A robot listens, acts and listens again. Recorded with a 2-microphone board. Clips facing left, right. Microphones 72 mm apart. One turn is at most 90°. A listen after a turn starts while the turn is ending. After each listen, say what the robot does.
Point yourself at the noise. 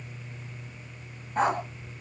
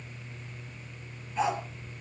Turn 50° left.
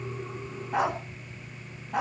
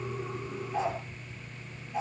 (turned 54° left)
Turn 75° left.
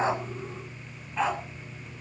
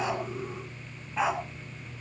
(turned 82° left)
Facing the dog barking.